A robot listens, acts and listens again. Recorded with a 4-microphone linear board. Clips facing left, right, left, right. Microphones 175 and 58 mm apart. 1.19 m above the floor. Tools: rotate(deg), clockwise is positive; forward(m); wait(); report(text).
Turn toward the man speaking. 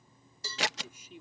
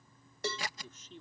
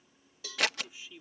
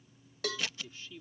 rotate(-30)
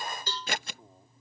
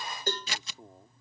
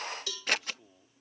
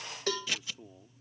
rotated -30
rotate(20)
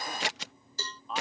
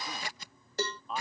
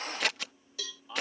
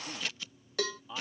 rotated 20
report("Facing the man speaking.")